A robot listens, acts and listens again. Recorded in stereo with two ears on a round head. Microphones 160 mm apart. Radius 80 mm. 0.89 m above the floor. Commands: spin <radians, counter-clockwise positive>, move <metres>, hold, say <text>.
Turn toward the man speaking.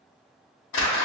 hold
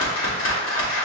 hold
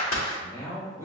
spin 0.26
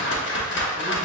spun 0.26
hold
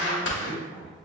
spin 0.44
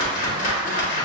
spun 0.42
hold
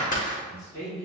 spin 2.27
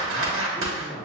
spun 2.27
say Facing the man speaking, over 4 m away.